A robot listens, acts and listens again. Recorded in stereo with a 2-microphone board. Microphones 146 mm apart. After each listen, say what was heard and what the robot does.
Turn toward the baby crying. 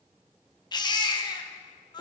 The baby crying: about 30° left or 150° left. Turn 30° left.
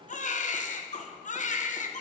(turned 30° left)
So it is at 120° left. Turn 120° left.
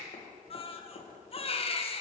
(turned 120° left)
The baby crying is now 40° left. Turn 40° left.
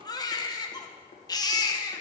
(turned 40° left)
The baby crying is now 25° left. Turn 25° left.
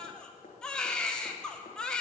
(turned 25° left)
Facing the baby crying, under 1 m away.